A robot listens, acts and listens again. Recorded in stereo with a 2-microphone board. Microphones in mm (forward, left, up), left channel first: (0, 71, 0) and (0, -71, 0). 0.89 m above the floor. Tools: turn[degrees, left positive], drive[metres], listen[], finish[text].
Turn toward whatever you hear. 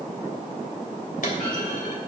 Thought: The clunk: about 65° left or 115° left.
Action: turn[65]
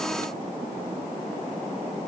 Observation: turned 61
Action: listen[]
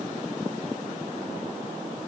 Action: finish[I heard a clunk, but can't make it out now. It was about 5° left or 50° left.]